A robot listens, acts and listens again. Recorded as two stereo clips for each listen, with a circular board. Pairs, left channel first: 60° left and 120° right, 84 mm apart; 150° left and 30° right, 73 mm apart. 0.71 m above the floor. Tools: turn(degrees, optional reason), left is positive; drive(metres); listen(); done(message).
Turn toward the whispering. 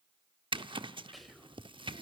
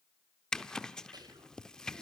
turn(degrees=-30, reason="The whispering: 30° right.")
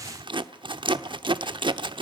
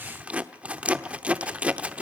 listen()
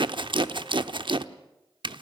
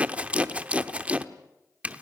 listen()
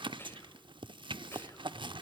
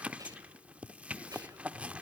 done("Found it: whispering, straight ahead, over 4 m away.")